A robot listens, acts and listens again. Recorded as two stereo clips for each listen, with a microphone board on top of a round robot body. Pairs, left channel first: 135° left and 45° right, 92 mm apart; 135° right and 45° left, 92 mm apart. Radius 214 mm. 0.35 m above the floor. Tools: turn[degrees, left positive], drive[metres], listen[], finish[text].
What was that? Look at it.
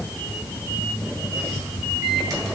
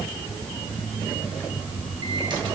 Action: finish[Found it: a microwave, straight ahead, 2 to 4 m away.]